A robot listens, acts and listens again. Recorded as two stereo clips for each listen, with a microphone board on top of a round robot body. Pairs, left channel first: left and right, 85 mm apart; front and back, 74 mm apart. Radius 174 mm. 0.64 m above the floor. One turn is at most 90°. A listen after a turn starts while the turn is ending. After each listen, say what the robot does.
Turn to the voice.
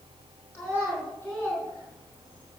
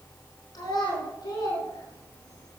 Turn 25° left.
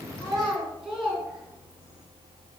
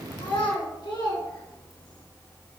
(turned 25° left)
Facing the child speaking.